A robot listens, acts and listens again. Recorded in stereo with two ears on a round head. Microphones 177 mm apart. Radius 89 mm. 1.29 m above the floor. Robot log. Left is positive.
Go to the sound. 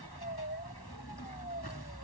cmd idle
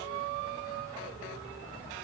cmd idle
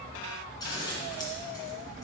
note: The scissors: about 20° left or 160° left.
cmd yaw +20
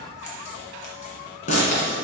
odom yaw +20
note: So it is at 135° left.
cmd yaw +135
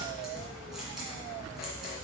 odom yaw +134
cmd idle
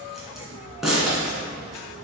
cmd fwd 1.0
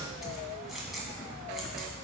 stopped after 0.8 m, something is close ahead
end: Arrived at the scissors, straight ahead.